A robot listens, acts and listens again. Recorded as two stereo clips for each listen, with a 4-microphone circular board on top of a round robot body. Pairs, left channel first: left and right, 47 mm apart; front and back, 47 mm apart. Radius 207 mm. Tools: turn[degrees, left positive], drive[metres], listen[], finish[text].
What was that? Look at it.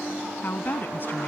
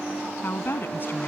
Thought: The woman speaking: 45° left.
Action: turn[45]
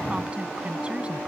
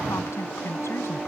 Thought: The woman speaking is now 25° right.
Action: turn[-25]
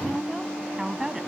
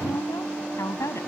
Thought: The woman speaking is now 10° right.
Action: turn[-10]
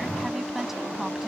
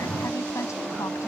Action: listen[]
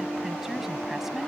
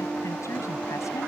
Action: listen[]
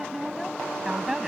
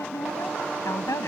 Thought: The woman speaking is now 10° right.
Action: turn[-10]
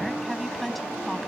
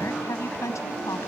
Action: finish[Facing the woman speaking.]